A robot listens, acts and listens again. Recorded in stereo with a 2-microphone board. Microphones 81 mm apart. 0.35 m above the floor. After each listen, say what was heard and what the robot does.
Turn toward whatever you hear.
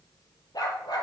The dog barking: about 65° left or 115° left. Turn 65° left.
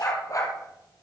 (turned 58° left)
So it is at 45° left. Turn 45° left.
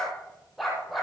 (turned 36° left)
Facing the dog barking.